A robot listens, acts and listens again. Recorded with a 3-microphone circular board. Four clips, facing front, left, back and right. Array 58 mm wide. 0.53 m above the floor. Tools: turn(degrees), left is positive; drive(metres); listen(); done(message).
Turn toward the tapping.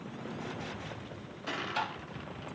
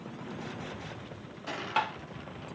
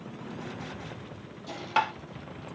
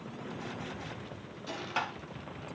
turn(degrees=165)
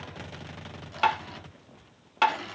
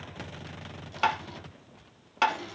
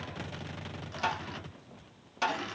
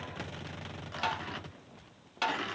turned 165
turn(degrees=35)
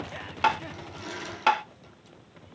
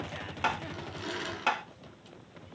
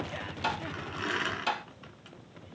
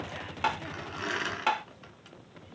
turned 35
done("Facing the tapping.")